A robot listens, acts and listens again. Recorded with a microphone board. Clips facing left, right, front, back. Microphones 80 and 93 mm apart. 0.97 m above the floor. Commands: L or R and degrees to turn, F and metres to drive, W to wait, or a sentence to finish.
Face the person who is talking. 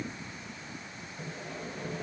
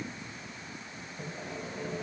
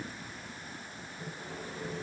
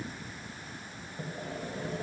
W
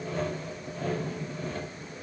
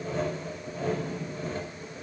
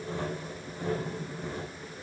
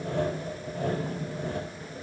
W
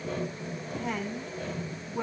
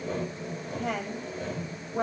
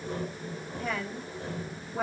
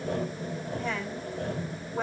R85
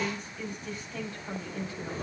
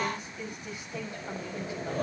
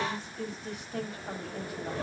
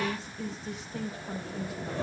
R15
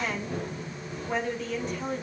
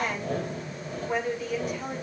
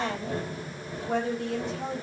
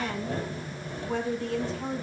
Facing the woman speaking.